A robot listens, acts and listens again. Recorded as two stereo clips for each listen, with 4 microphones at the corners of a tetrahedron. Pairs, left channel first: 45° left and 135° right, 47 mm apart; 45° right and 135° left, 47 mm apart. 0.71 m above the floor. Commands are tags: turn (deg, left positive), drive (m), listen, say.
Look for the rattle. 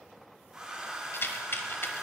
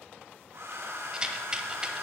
<turn deg="65"/>
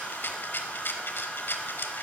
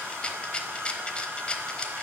<turn deg="15"/>
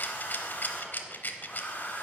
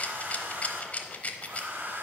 <say>Facing the rattle, under 1 m away.</say>